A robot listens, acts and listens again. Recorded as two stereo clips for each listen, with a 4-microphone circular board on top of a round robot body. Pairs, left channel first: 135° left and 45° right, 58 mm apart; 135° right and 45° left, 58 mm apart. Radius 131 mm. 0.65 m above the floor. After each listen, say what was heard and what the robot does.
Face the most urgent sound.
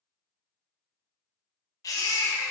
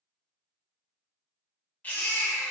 The baby crying: 160° left. Turn 160° left.
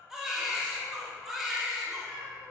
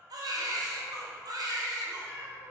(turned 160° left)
The baby crying is now 40° left. Turn 40° left.
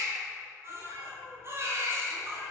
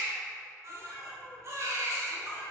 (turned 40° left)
Facing the baby crying, under 1 m away.